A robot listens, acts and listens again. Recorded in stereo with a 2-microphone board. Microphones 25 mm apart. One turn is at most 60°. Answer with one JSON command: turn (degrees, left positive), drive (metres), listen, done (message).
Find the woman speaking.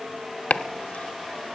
{"listen": true}
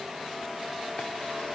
{"listen": true}
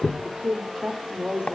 {"turn": -35}
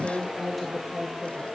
{"turn": 20}
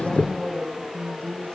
{"turn": 10}
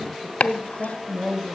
{"done": "Facing the woman speaking."}